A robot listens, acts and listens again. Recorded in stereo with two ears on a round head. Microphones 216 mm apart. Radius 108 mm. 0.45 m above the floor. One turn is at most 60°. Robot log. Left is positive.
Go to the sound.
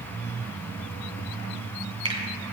note: The finger snap: about 20° right or 160° right.
cmd yaw -20
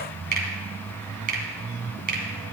note: So it is at 140° right.
cmd yaw -60
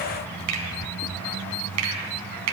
note: The finger snap is now 75° right.
cmd yaw -60
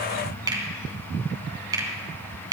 note: The finger snap is now 20° right.
cmd yaw -20
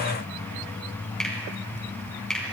cmd fwd 1.0
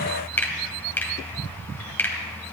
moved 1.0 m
note: The finger snap is now 10° left.
cmd yaw +10
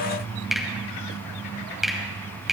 cmd fwd 1.0
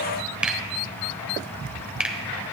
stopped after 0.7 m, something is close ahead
end: Arrived at the finger snap, straight ahead.